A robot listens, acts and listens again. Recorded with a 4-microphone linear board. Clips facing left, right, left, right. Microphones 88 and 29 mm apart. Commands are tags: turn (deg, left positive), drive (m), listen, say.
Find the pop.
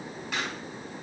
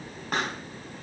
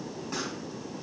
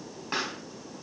<turn deg="-50"/>
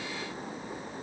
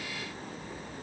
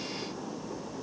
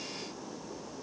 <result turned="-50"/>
<listen/>
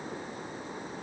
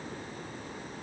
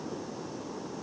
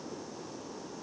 <say>I heard a pop, but can't make it out now. It was about straight ahead or 80° right.</say>